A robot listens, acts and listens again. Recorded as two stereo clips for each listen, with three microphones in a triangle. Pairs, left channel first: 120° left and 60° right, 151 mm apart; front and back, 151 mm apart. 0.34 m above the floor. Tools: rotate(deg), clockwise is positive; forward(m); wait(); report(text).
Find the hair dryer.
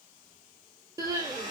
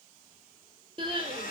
report("Facing the hair dryer, 2 to 4 m away.")